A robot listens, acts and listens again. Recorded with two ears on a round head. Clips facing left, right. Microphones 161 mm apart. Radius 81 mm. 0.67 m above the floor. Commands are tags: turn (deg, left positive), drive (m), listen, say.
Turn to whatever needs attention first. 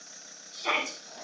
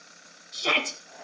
<turn deg="-40"/>
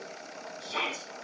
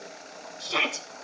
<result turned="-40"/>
<turn deg="-95"/>
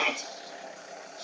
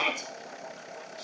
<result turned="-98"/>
<say>Facing the shout, 2 to 4 m away.</say>